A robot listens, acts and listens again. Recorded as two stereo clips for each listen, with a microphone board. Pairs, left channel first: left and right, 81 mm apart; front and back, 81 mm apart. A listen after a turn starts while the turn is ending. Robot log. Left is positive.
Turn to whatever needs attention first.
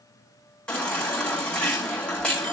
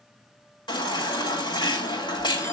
note: The baby crying: 15° left.
cmd yaw +15
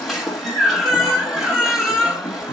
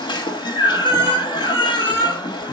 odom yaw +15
end: Facing the baby crying.